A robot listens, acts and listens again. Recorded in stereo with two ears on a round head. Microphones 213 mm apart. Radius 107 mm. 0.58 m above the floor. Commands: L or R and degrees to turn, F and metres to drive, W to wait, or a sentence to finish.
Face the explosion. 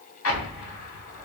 L60
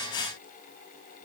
W
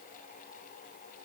I heard an explosion, but can't make it out now. It was about straight ahead or 60° left.